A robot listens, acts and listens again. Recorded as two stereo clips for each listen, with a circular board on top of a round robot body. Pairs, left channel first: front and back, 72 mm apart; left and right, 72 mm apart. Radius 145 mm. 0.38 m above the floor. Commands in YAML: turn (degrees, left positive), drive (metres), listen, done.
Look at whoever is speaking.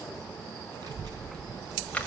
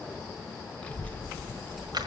turn: 160
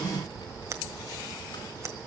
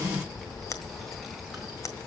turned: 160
done: "Facing the child speaking, over 4 m away."